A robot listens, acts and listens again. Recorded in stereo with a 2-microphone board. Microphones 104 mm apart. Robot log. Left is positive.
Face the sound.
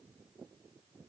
cmd idle
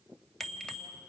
cmd yaw +30
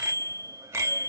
note: So it is at 25° right.
cmd yaw -25
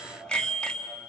note: The bicycle bell is now 10° left.
cmd yaw +10
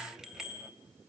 end: Facing the bicycle bell, 2 to 4 m away.